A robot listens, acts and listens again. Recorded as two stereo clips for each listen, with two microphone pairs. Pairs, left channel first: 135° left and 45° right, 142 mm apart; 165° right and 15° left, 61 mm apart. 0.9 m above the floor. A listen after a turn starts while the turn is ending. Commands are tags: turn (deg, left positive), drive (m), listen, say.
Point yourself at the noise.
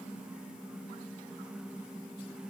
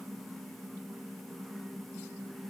<listen/>
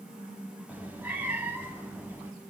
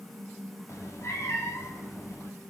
<turn deg="-120"/>
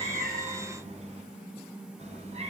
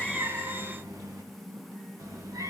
<say>Found it: a cat meowing, straight ahead, 2 to 4 m away.</say>